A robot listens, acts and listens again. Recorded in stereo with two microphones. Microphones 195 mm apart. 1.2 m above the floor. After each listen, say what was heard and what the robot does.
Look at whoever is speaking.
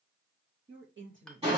Turn 90° right.
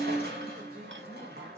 Keep listening.
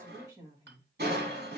The woman speaking is now 20° right. Turn 20° right.
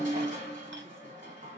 Keep listening.
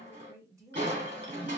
The woman speaking is now 15° right. Turn 15° right.
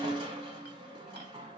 Keep listening.
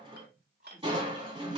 Keep listening.
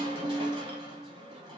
I heard a woman speaking from this way, but can't make it out now.